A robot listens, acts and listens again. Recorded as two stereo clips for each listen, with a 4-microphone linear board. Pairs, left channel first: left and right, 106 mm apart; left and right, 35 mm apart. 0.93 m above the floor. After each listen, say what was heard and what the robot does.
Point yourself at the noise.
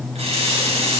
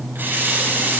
Turn 90° right.
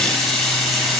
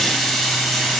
Facing the running tap, over 4 m away.